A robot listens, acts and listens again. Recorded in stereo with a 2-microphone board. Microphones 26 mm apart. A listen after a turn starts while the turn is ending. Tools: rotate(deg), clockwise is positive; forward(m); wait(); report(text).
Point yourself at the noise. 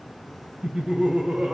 rotate(60)
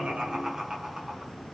rotate(20)
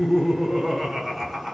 report("Found it: laughter, straight ahead.")